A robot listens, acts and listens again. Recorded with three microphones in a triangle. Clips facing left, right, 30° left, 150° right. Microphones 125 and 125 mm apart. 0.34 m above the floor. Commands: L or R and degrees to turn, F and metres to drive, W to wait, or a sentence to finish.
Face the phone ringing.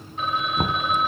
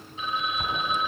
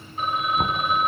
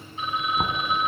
L65
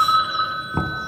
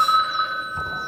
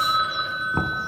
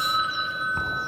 L10
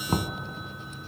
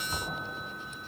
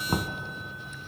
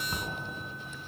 W
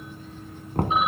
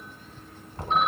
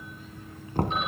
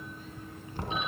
W
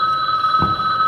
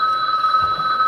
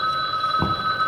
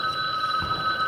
Facing the phone ringing, 1 to 2 m away.